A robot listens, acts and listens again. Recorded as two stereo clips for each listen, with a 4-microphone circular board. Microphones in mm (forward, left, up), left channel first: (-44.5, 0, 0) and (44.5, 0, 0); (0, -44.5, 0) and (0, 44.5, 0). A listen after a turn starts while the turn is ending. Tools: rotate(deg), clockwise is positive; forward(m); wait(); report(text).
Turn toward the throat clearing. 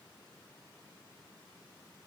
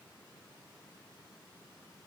wait()
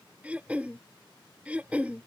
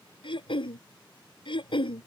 rotate(75)
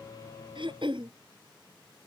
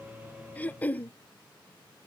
rotate(20)
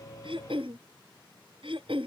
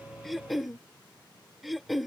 report("Found it: throat clearing, straight ahead.")